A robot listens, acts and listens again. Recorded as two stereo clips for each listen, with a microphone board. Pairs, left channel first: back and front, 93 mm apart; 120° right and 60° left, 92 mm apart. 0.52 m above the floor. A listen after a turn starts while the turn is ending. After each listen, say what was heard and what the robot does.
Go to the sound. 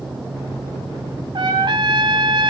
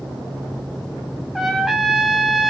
The trumpet: 30° right. Turn 30° right.
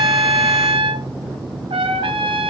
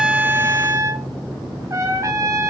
Drive 1.0 m forward.
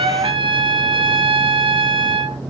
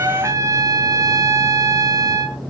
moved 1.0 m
The trumpet is now 10° left. Turn 10° left.
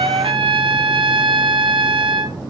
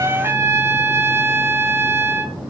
Drive 1.0 m forward.
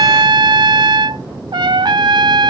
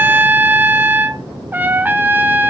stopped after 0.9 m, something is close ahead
I am next to the trumpet.